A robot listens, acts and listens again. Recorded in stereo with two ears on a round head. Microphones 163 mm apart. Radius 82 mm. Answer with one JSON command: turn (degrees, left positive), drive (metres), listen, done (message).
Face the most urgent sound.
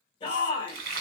{"turn": 25}
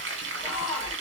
{"done": "Found it: a shout, straight ahead, 1 to 2 m away."}